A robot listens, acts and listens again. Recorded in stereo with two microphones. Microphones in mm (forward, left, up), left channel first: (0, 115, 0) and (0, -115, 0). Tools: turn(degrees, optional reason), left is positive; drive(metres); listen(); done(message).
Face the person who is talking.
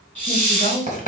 turn(degrees=-35, reason="The woman speaking: about 35° right or 145° right.")
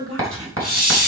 turn(degrees=-110, reason="So it is at 110° right.")
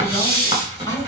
listen()
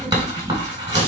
listen()
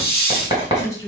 turn(degrees=15, reason="The woman speaking is now 15° left.")
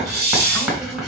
listen()
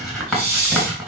listen()
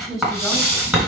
done("Facing the woman speaking.")